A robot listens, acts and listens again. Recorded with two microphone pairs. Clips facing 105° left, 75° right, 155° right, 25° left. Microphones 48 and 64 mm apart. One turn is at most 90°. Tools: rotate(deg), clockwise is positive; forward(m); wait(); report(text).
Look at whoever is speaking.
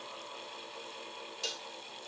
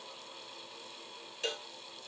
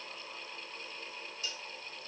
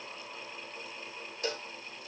wait()
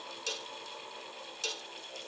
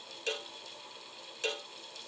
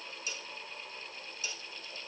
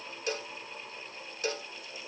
wait()
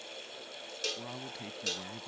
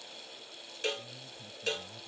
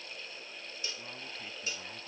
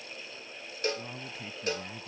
rotate(-90)
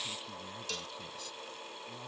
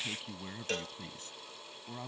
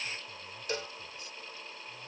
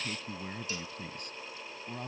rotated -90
rotate(15)
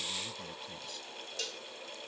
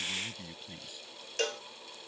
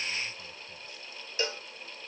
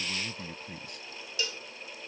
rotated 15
report("Found it: a man speaking, straight ahead.")